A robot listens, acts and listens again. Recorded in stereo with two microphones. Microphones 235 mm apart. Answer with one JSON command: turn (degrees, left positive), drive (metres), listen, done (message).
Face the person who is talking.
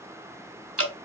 {"listen": true}
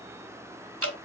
{"listen": true}
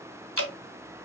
{"done": "I can't make out anyone speaking, only dripping."}